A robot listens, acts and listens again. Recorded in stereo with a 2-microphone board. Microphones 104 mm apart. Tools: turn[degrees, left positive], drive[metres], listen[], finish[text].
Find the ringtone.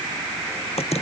Action: listen[]
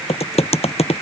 Action: listen[]
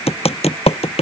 Action: finish[I can't make out a ringtone, only typing on a keyboard.]